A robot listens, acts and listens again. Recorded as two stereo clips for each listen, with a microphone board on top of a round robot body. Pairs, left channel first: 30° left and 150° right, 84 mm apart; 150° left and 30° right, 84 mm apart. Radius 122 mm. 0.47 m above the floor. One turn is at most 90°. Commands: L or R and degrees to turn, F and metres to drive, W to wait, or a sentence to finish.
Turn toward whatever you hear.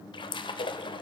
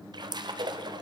Facing the splash.